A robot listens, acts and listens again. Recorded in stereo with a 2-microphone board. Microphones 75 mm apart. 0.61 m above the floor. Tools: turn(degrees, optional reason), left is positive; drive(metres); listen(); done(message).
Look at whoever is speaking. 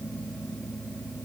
listen()
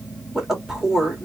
turn(degrees=-30)
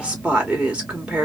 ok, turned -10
turn(degrees=-15, reason="The woman speaking: about 15° right or 165° right.")
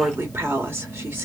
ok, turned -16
turn(degrees=-150, reason="So it is at 150° right.")
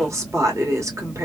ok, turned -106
turn(degrees=-45, reason="The woman speaking is now 45° right.")
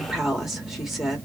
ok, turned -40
done("Found it: a woman speaking, straight ahead, 1 to 2 m away.")